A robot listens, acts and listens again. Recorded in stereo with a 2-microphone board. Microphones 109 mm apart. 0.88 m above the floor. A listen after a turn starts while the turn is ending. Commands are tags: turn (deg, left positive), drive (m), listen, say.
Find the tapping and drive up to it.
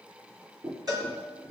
<turn deg="-55"/>
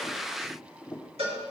<drive m="1.0"/>
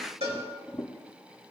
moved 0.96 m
<turn deg="10"/>
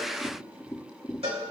<drive m="1.0"/>
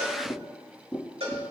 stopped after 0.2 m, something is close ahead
<say>Arrived at the tapping, straight ahead.</say>